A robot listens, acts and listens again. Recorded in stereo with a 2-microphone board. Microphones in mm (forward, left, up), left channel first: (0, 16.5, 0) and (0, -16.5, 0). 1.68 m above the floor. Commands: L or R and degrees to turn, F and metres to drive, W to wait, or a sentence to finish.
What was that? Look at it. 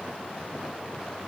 W
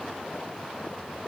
W
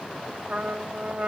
R40
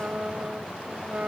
R95
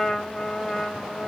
Found it: a trumpet, straight ahead, 1 to 2 m away.